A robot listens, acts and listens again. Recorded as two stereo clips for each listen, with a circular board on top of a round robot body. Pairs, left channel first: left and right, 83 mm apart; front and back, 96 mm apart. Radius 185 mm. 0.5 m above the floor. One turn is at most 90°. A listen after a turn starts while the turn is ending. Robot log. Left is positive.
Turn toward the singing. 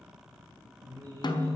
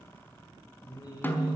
note: The singing: 50° right.
cmd yaw -50
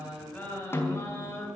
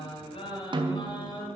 note: The singing is now 30° left.
cmd yaw +30
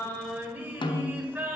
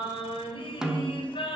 note: The singing is now 25° right.
cmd yaw -25
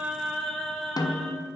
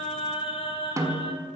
end: Facing the singing.